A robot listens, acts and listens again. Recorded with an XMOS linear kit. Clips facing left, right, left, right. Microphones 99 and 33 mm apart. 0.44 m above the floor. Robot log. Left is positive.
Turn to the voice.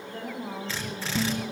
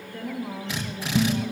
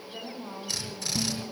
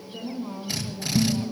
note: The woman speaking: about 35° left or 145° left.
cmd yaw +35
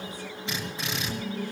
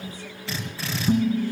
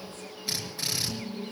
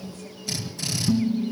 cmd idle
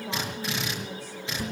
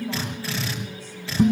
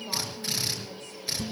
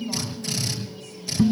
cmd idle
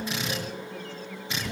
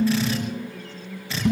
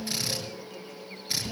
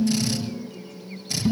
end: I heard a woman speaking, but can't make it out now. It was about straight ahead or 110° left.